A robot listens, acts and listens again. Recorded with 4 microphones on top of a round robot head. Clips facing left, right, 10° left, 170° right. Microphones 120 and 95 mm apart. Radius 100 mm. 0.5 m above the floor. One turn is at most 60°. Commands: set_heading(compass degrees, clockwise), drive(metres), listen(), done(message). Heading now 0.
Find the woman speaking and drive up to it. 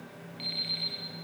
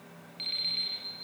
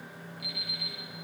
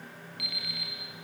listen()
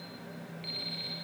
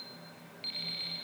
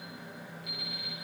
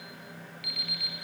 listen()
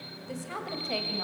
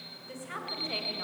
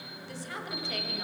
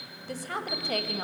set_heading(300)
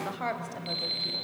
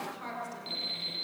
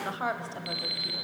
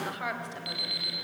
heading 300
set_heading(240)
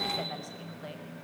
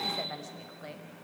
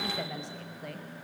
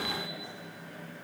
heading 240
set_heading(230)
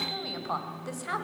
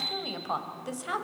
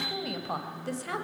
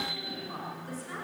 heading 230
set_heading(240)
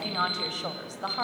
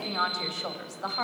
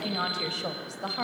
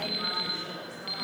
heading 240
drive(1.0)
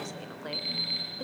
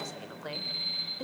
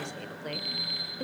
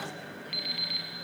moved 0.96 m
drive(1.0)
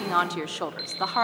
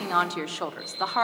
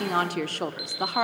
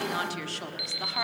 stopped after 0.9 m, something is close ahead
done("I am next to the woman speaking.")